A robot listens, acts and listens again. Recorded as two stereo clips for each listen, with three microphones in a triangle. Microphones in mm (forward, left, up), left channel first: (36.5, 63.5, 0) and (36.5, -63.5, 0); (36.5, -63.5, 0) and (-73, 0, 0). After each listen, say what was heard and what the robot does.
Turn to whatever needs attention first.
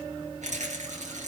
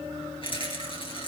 Keep listening.
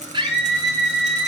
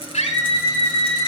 The scream: 45° right. Turn 45° right.
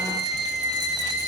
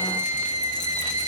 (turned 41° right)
Facing the scream, over 4 m away.